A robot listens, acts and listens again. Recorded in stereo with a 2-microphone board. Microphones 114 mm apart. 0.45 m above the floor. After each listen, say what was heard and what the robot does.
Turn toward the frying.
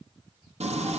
Turn 90° right.
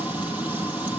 So it is at 15° right. Turn 15° right.
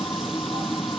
Found it: frying, straight ahead, 2 to 4 m away.